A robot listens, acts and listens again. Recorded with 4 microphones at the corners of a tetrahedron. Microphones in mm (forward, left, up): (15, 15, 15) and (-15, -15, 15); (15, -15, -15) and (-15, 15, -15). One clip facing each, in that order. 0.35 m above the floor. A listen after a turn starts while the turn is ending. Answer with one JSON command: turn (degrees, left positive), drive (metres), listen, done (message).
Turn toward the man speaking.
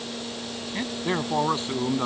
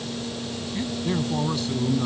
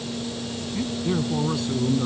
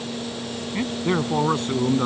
{"turn": 95}
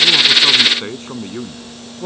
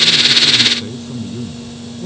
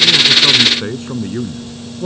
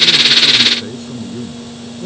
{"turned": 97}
{"done": "Facing the man speaking."}